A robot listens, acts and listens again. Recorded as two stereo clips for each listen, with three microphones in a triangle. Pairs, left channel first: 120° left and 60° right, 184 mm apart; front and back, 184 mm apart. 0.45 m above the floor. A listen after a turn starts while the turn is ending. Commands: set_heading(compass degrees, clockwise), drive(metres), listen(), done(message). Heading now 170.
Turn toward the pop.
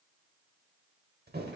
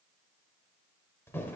listen()
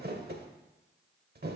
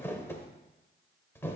listen()
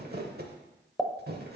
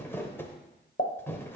set_heading(140)
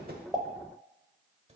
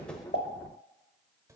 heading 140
done("Facing where the pop came from. I can't hear it now.")